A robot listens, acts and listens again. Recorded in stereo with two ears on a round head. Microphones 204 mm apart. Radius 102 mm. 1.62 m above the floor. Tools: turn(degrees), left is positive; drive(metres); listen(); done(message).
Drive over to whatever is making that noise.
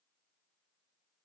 listen()
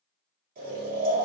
turn(degrees=-40)
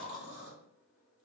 drive(metres=1.0)
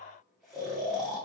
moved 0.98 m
drive(metres=1.0)
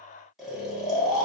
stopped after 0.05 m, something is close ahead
done("I am next to the snoring.")